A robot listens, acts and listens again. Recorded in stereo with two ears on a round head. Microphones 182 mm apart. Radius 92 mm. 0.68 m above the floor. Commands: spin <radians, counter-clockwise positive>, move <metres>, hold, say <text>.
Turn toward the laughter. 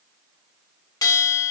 hold
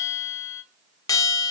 hold
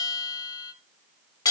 say I can't make out laughter, only a bell.